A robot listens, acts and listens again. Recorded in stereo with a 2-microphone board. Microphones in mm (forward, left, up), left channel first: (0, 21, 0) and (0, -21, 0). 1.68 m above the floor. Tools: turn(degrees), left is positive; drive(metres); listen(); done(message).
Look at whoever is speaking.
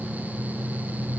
listen()
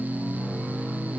listen()
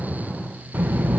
turn(degrees=-45)
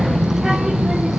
turn(degrees=-10)
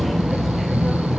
done("Facing the child speaking, under 1 m away.")